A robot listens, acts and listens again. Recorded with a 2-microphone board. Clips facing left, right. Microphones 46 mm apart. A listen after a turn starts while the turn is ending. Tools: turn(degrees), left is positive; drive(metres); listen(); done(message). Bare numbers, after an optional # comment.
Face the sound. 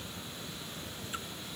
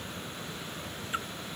# The splash: about 30° right or 150° right.
turn(-30)
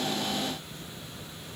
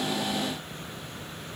listen()
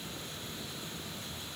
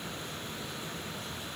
done("I heard a splash, but can't make it out now. It was about straight ahead or 120° right.")